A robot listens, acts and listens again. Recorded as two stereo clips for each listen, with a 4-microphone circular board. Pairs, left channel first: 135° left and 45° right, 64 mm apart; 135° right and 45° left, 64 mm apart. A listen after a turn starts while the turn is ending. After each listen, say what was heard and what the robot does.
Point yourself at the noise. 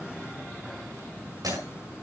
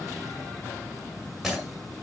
The breaking glass: 45° right. Turn 45° right.
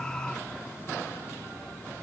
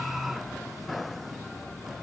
Facing where the breaking glass came from. I can't hear it now.